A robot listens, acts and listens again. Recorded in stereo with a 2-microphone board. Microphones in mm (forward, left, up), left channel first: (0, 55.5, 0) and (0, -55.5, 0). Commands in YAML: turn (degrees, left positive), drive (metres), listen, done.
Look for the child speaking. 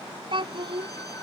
turn: -50
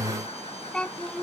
turn: 15
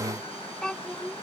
turn: 10
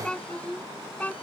turn: 15
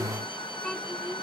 turn: 10
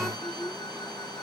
done: "Facing the child speaking."